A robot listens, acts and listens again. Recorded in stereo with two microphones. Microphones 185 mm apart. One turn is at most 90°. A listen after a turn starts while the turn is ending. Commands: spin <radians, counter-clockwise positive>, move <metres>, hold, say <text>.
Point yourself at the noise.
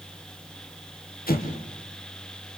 spin 0.87
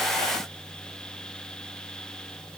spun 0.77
hold
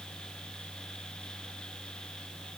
say I heard an explosion, but can't make it out now. It was about 10° left or 85° left.